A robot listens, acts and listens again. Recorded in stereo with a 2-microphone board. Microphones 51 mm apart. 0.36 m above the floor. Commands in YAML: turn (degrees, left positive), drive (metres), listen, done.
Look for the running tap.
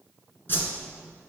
listen: true
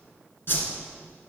listen: true
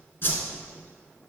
done: "I can't make out a running tap, only a whoosh."